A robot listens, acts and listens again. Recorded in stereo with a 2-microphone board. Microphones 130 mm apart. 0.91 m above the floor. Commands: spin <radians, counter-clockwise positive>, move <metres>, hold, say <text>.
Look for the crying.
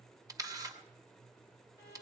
hold
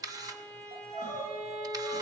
spin -1.05
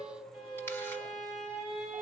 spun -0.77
spin -1.40
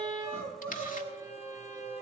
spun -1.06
spin -0.35
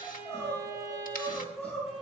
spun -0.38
say Facing the crying, over 4 m away.